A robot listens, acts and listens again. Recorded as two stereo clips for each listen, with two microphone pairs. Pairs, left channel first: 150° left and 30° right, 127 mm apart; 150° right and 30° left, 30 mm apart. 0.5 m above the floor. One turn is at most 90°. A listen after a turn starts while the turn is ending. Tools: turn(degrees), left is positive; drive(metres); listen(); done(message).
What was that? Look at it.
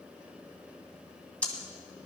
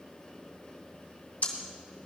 turn(degrees=-90)
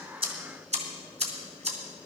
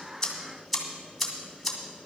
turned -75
turn(degrees=-60)
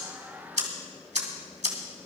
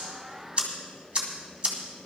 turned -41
turn(degrees=-15)
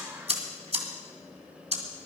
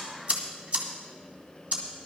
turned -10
done("Facing the ticking.")